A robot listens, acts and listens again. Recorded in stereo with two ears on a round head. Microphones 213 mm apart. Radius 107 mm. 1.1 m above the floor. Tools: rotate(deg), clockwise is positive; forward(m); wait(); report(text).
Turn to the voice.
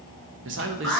rotate(55)
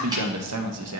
rotate(70)
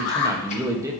rotate(15)
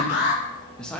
report("Found it: a man speaking, straight ahead, 1 to 2 m away.")